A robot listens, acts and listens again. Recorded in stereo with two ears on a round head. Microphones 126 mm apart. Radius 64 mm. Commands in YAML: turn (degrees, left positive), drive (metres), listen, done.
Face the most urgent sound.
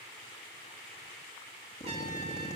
listen: true
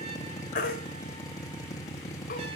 turn: 65
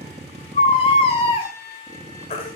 turn: 40
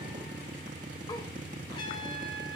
listen: true
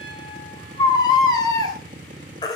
turn: 30
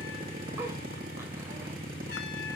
listen: true
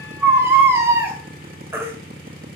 turn: -15
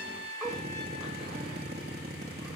listen: true
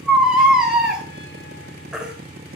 done: "Facing the baby crying."